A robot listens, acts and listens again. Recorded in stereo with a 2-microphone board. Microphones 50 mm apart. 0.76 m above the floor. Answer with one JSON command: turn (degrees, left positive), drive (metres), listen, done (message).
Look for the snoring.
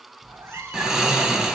{"turn": -30}
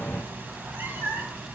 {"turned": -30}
{"listen": true}
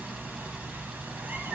{"turn": -135}
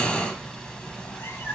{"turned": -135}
{"turn": 20}
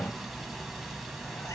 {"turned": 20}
{"done": "Found it: snoring, straight ahead."}